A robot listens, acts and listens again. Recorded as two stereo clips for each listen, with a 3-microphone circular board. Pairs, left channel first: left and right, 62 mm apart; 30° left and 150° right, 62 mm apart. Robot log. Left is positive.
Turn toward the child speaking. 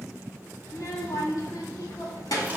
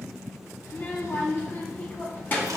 note: The child speaking: 85° left.
cmd yaw +85
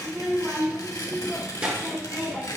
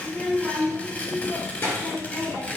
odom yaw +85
note: The child speaking is now 15° right.
cmd yaw -15
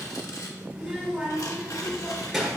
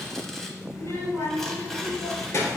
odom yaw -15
end: Found it: a child speaking, straight ahead.